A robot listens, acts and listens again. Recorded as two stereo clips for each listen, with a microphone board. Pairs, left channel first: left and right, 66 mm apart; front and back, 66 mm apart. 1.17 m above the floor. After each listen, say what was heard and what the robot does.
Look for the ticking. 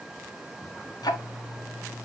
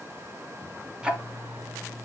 The ticking: 100° left. Turn 100° left.
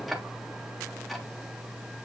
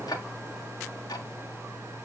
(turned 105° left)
Facing the ticking.